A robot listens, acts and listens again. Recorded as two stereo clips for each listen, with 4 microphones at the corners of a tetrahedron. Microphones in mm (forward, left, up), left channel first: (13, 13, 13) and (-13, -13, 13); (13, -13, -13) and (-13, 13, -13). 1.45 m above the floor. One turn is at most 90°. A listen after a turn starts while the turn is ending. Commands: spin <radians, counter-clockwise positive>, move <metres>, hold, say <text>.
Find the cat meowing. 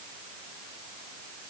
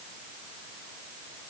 hold
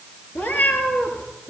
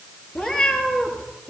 spin 0.61
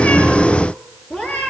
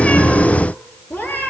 say Found it: a cat meowing, straight ahead.